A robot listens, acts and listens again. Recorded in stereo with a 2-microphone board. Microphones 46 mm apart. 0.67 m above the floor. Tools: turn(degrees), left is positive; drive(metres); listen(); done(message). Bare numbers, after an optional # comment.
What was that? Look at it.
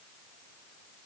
listen()
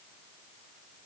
listen()
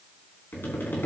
# The tapping: about 50° left or 130° left.
turn(50)
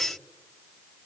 listen()
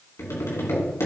# So it is at 80° left.
turn(80)
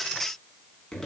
# The tapping is now 15° left.
turn(15)
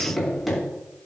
done("Found it: tapping, straight ahead, over 4 m away.")